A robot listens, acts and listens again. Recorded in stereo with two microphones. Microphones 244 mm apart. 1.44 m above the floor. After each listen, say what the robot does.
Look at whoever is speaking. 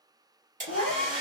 Turn 70° left.
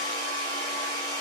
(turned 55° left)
Keep listening.
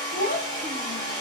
Turn 40° left.
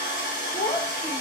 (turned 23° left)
Turn 15° left.
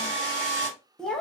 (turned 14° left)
Facing the child speaking.